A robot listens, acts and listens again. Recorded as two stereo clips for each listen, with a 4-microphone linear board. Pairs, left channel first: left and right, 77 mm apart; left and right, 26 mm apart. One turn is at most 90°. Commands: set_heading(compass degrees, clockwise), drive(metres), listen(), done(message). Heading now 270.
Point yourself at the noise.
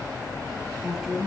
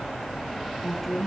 set_heading(300)
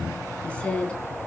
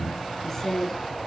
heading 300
set_heading(285)
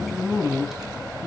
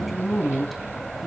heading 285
done("Found it: a woman speaking, straight ahead, 2 to 4 m away.")